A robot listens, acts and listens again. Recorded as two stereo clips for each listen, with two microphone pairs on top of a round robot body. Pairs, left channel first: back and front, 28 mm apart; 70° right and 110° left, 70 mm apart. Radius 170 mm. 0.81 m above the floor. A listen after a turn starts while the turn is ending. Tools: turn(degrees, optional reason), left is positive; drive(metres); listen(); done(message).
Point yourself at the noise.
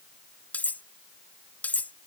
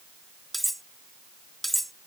turn(degrees=-155, reason="The cutlery clinking: 155° right.")
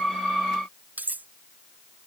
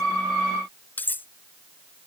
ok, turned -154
done("Facing the cutlery clinking.")